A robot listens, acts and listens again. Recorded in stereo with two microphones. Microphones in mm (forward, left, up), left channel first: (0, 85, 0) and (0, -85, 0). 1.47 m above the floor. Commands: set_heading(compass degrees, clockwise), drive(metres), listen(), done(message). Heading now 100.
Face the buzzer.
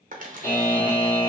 set_heading(40)
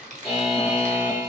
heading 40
done("Found it: a buzzer, straight ahead, 1 to 2 m away.")